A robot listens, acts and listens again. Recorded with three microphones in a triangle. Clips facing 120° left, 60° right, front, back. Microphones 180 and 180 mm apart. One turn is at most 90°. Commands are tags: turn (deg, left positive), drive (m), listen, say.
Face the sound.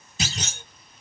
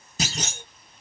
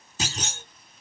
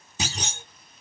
<turn deg="-90"/>
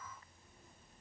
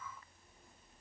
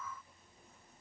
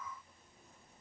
<turn deg="-20"/>
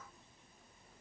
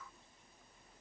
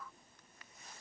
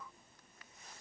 <say>Facing where the clunk came from. I can't hear it now.</say>